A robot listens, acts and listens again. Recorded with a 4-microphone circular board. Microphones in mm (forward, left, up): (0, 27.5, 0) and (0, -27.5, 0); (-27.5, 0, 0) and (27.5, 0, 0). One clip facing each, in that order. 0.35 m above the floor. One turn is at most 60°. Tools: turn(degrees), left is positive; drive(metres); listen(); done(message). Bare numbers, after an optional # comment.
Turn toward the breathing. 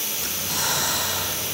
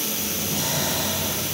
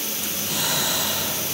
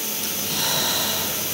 # The breathing: 95° left.
turn(60)
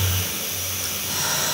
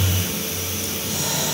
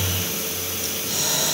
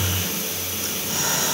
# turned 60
# The breathing is now 55° left.
turn(55)
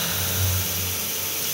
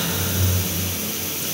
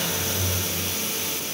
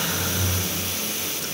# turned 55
# The breathing is now 10° right.
turn(-10)
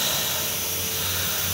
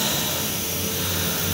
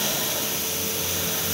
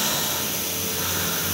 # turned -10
done("Facing the breathing.")